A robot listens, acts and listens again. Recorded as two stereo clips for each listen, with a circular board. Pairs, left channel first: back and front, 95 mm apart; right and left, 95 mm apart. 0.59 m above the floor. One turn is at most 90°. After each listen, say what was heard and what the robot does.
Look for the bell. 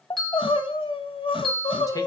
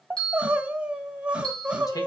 The bell: 95° right. Turn 90° right.
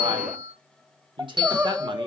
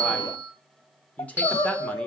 The bell is now 20° left. Turn 20° left.
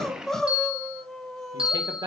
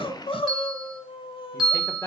Facing the bell.